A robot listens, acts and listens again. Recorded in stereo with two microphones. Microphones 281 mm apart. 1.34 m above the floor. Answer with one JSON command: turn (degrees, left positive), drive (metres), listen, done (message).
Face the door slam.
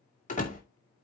{"turn": 25}
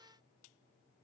{"listen": true}
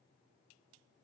{"done": "I heard a door slam, but can't make it out now. It was about straight ahead or 130° left."}